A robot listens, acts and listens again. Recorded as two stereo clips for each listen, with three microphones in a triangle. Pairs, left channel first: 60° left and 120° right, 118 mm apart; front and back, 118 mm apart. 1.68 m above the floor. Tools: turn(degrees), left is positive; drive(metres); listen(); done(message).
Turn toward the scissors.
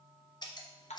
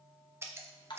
turn(degrees=110)
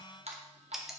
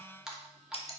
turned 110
turn(degrees=-35)
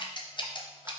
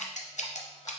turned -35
turn(degrees=10)
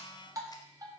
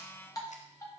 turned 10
listen()
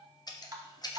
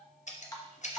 done("Facing the scissors.")